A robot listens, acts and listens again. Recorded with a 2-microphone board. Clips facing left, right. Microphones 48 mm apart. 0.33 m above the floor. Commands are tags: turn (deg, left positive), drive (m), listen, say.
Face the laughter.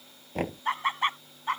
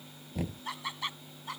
<turn deg="45"/>
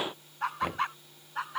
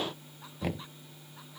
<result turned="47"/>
<turn deg="65"/>
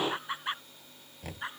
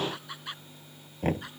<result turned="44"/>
<turn deg="25"/>
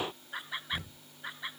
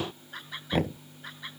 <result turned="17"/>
<turn deg="10"/>
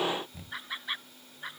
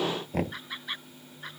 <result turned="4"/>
<say>Facing the laughter.</say>